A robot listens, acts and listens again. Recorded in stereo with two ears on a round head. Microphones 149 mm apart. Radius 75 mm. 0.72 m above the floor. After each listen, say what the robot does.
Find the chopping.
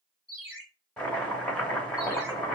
Turn 30° left.
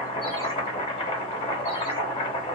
Turn 140° left.
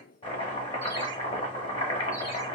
Turn 30° left.
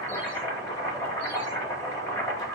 Turn 20° left.
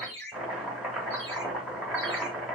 Facing the chopping.